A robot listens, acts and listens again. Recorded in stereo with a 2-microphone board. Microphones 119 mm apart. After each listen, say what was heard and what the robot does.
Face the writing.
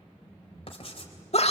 The writing: about 50° left or 130° left. Turn 50° left.
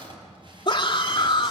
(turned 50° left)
Keep listening.
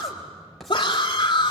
Found it: writing, straight ahead.